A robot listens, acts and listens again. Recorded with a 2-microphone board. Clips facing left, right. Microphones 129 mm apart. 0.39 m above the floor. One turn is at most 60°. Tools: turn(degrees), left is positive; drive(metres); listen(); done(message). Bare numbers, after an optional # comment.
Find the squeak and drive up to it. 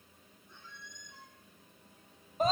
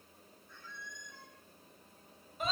# The squeak: about 20° left or 160° left.
turn(20)
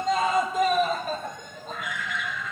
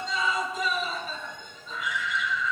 listen()
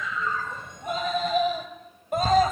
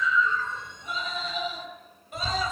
listen()
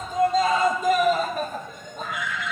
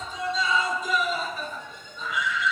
done("I heard a squeak, but can't make it out now. It was about straight ahead or 140° left. I did not reach it.")